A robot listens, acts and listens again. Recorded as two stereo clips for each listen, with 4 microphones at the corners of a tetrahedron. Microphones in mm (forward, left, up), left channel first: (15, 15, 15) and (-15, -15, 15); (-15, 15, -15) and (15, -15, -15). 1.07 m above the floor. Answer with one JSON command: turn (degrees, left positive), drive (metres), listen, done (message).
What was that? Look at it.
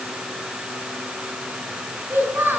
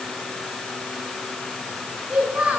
{"turn": -105}
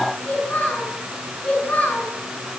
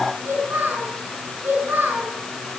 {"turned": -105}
{"done": "Found it: a child speaking, straight ahead."}